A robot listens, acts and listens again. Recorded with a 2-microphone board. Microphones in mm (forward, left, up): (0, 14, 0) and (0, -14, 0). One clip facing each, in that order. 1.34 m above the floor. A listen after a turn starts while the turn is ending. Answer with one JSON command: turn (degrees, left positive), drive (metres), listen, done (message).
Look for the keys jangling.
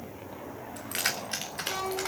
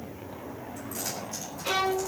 {"turn": 55}
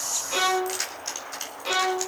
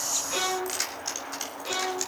{"done": "Facing the keys jangling, over 4 m away."}